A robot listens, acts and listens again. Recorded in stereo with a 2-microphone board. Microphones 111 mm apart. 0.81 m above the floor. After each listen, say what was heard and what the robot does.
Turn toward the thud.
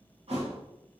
The thud: about 65° right or 115° right. Turn 65° right.
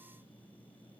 Keep listening.
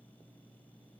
I heard a thud, but can't make it out now. It was about straight ahead or 50° right.